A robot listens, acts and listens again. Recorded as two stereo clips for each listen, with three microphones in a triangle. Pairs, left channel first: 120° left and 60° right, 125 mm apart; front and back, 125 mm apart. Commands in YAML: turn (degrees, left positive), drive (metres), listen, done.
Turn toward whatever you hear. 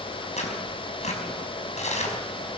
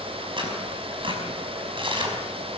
turn: 135
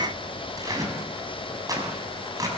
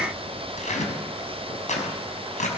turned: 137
done: "Facing the tearing paper."